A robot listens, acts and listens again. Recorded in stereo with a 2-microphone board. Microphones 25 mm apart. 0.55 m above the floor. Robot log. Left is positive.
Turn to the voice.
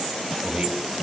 note: The man speaking: about 45° right or 135° right.
cmd yaw -45
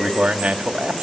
note: So it is at 90° right.
cmd yaw -90
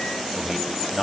note: The man speaking is now 10° left.
cmd yaw +10
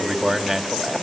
end: Found it: a man speaking, straight ahead, 2 to 4 m away.